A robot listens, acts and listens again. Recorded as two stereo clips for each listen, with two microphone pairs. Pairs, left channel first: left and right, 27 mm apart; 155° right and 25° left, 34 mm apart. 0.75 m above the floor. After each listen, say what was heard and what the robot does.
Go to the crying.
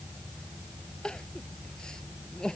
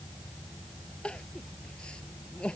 The crying: 145° left. Turn 145° left.
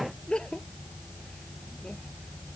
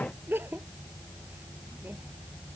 The crying is now 35° left. Turn 35° left.
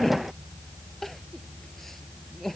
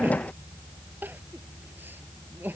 The crying is now 10° left. Turn 10° left.
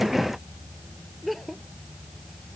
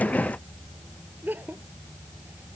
Drive 1.0 m forward.
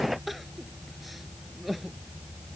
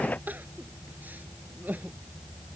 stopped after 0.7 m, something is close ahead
Blocked. The crying is further on, straight ahead.